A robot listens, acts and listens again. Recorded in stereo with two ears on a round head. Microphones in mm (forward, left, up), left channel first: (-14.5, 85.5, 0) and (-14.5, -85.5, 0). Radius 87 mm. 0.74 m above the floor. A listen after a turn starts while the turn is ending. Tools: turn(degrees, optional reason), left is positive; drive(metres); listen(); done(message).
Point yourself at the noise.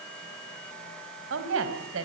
turn(degrees=-90)
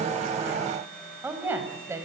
turn(degrees=-15, reason="So it is at 15° right.")
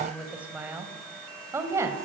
turn(degrees=-15, reason="The woman speaking is now 15° right.")
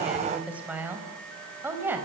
turn(degrees=-10, reason="The woman speaking is now 10° right.")
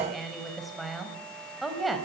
done("Facing the woman speaking, over 4 m away.")